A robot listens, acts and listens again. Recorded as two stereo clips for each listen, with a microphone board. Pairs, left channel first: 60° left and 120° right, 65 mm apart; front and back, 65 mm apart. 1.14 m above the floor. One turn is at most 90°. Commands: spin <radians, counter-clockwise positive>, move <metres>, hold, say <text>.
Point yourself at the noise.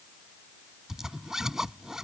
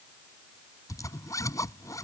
spin -0.61
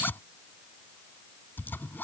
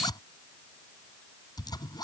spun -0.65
say Found it: a zipper, straight ahead.